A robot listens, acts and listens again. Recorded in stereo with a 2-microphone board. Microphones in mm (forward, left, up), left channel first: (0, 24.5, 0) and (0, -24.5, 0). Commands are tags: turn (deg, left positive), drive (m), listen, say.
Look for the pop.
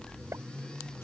<turn deg="-90"/>
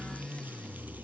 <say>I heard a pop from this way, but can't make it out now.</say>